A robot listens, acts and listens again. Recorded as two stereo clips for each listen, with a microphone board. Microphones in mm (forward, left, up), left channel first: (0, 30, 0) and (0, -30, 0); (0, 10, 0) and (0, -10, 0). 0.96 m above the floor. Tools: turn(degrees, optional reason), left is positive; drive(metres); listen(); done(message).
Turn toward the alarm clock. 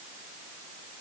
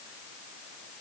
listen()
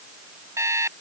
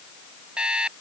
turn(degrees=-55, reason="The alarm clock: about 55° right or 125° right.")
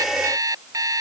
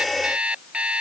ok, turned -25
turn(degrees=-100, reason="So it is at 100° right.")
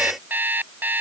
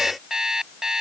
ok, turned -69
turn(degrees=-30, reason="The alarm clock is now 30° right.")
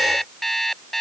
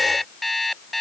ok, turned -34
done("Facing the alarm clock.")